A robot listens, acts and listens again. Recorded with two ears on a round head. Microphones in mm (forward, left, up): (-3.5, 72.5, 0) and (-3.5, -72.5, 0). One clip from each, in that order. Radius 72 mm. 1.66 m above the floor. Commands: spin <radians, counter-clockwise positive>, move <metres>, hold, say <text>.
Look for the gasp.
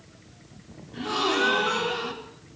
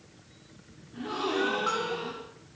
spin 0.70
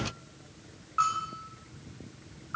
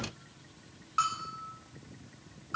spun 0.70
hold
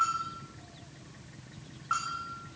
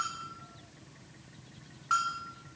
say I heard a gasp, but can't make it out now. It was about straight ahead or 100° left.